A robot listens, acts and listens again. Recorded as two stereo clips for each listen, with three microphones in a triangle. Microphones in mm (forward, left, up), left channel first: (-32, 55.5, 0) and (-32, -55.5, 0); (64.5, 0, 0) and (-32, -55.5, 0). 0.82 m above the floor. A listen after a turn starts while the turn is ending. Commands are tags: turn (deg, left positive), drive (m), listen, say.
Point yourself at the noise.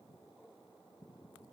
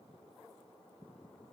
<listen/>
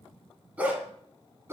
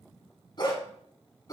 <turn deg="-25"/>
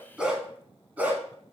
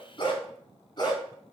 <turn deg="-20"/>
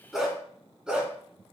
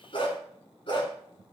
<turn deg="-10"/>
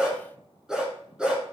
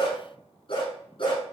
<turn deg="-10"/>
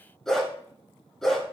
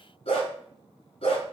<say>Found it: a dog barking, straight ahead.</say>